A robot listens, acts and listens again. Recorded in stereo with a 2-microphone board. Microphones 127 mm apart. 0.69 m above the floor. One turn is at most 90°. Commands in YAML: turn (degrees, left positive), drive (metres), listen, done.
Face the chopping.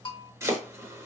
turn: -20
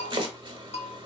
turn: -90
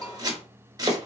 turn: -30
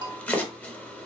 turn: 10
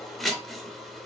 done: "Facing the chopping, 1 to 2 m away."